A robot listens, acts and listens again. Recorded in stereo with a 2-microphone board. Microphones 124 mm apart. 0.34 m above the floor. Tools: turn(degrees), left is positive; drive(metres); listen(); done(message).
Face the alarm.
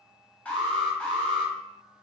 turn(degrees=30)
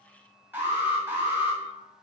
turn(degrees=-20)
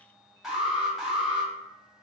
done("Found it: an alarm, straight ahead, 1 to 2 m away.")